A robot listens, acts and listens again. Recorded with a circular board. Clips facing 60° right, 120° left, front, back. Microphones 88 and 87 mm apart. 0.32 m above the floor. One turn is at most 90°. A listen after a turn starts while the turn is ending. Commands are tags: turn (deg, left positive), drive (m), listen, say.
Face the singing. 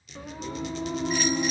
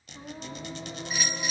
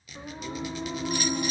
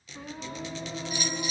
<turn deg="-35"/>
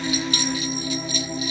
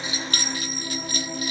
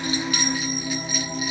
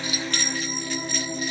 <turn deg="40"/>
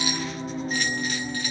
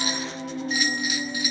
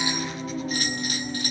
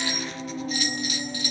<turn deg="15"/>
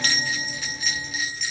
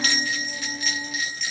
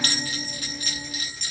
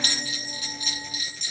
<turn deg="10"/>
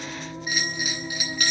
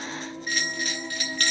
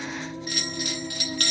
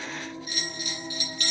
<turn deg="10"/>
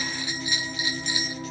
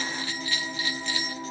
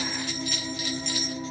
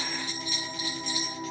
<say>Found it: singing, straight ahead, 2 to 4 m away.</say>